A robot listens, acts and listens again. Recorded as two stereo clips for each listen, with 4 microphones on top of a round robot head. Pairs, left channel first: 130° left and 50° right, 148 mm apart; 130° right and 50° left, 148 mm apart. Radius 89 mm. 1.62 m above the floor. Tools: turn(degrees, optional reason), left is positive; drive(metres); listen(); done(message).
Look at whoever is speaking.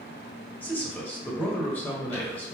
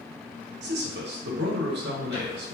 turn(degrees=50, reason="The man speaking: 50° left.")
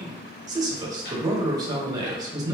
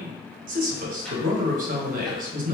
turn(degrees=15, reason="The man speaking is now 15° left.")
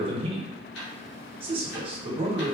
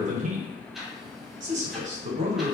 turn(degrees=10, reason="The man speaking is now 10° left.")
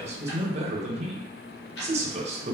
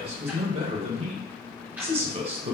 done("Facing the man speaking.")